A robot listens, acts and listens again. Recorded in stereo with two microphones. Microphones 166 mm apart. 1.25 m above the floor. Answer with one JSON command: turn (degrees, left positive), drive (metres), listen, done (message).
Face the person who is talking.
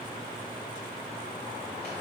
{"listen": true}
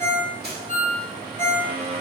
{"listen": true}
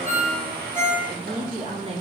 {"turn": -35}
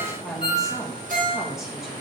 {"done": "Facing the woman speaking."}